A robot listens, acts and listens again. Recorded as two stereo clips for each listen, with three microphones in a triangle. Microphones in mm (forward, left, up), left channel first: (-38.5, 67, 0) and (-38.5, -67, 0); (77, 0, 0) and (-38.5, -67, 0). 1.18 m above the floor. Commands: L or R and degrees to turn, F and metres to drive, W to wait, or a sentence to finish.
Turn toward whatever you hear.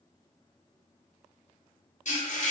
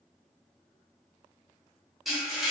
L120
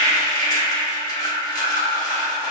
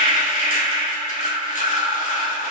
L30
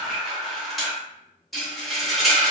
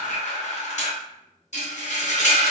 Found it: frying, straight ahead, under 1 m away.